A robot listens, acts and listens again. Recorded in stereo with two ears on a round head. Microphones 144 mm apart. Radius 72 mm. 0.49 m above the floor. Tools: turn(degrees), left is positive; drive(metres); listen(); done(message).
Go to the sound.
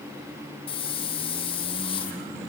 turn(degrees=35)
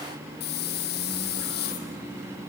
turn(degrees=110)
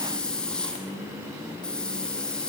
drive(metres=1.0)
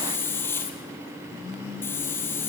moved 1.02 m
turn(degrees=15)
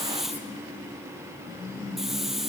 drive(metres=1.0)
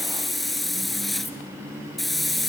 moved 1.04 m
drive(metres=1.0)
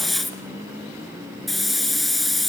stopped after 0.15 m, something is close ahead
done("Arrived at the hiss, straight ahead.")